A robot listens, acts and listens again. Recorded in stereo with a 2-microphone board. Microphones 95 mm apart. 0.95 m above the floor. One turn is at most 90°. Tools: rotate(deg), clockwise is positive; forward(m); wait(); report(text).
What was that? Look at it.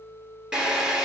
rotate(30)
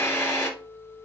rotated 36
rotate(-25)
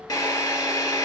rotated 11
rotate(-40)
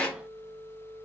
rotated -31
rotate(-10)
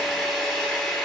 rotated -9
report("Facing the drill, 2 to 4 m away.")